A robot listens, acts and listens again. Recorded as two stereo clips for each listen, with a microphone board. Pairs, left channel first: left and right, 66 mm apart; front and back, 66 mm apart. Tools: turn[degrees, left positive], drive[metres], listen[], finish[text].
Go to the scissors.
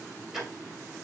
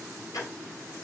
Action: listen[]
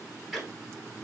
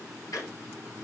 Action: listen[]
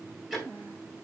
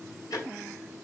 Action: finish[I can't make out scissors to turn to.]